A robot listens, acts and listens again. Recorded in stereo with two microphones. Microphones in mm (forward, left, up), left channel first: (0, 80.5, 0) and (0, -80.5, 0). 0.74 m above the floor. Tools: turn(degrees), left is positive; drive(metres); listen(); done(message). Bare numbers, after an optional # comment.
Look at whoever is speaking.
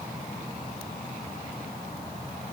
listen()
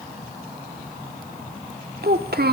turn(-90)
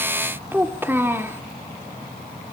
# So it is at 15° right.
turn(-15)
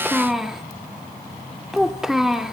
done("Facing the child speaking.")